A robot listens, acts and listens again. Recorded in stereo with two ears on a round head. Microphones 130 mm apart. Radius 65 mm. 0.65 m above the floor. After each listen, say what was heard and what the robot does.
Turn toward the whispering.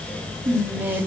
Turn 30° right.
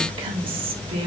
So it is at 135° right. Turn 135° right.
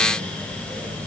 Keep listening.
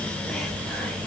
Keep listening.
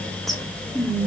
Facing the whispering.